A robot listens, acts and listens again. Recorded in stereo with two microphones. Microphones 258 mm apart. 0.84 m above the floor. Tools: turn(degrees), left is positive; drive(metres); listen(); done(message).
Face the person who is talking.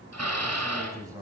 turn(degrees=-30)
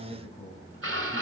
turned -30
turn(degrees=15)
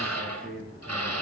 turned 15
done("Found it: a man speaking, straight ahead, over 4 m away.")